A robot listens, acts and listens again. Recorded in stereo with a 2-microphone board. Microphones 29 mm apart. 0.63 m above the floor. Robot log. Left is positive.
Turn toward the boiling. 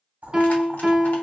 note: The boiling: about 60° right or 120° right.
cmd yaw -60
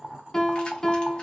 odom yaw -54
note: So it is at 40° right.
cmd yaw -40
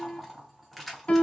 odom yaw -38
end: Facing the boiling, 1 to 2 m away.